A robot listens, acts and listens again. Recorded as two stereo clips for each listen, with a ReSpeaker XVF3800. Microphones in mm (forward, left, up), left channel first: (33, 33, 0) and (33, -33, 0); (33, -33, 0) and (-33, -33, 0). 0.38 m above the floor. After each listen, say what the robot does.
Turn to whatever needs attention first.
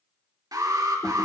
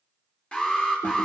Turn 70° right.
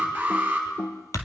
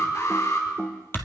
Turn 25° right.
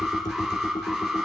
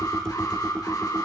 Found it: an alarm, straight ahead, over 4 m away.